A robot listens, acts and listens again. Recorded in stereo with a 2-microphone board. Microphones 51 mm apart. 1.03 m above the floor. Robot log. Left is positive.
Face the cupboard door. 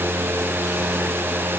cmd idle
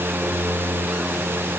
cmd idle
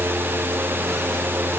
end: I can't make out a cupboard door to turn to.